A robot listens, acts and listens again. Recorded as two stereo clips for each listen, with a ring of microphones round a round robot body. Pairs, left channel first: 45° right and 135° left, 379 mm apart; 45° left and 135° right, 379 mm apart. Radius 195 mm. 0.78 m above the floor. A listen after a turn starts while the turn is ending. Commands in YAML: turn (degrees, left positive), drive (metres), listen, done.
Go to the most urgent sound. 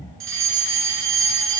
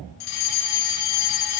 turn: 85
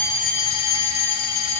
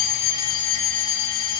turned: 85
drive: 1.0
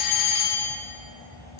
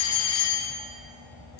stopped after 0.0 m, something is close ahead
done: "Something is in my way. I am facing the fire alarm but have not reached it."